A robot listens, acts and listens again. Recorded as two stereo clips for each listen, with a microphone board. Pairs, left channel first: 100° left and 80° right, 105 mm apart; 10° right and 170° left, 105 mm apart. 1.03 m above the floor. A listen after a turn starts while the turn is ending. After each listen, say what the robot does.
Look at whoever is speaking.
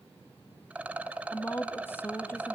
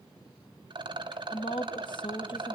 Turn 30° left.
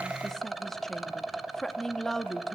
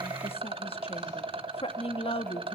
Turn 15° left.
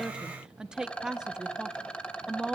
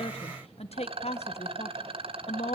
Facing the woman speaking, 1 to 2 m away.